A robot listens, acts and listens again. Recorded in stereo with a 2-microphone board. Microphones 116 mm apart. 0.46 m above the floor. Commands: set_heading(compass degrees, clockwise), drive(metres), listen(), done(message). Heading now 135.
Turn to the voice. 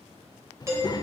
set_heading(100)
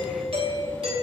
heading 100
listen()
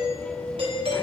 listen()
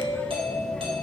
set_heading(90)
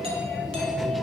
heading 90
done("Facing the child speaking.")